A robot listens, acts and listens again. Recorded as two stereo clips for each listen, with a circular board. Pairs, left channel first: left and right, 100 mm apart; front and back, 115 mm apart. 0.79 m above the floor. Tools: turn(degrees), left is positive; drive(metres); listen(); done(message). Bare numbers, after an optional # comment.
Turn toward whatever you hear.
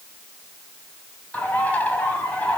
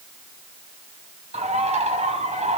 # The bird: 165° left.
turn(165)
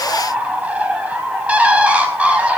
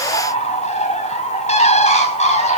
# The bird is now 15° right.
turn(-15)
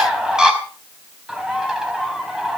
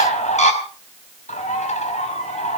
# The bird is now 10° right.
turn(-10)
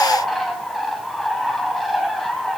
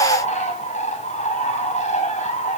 done("Facing the bird.")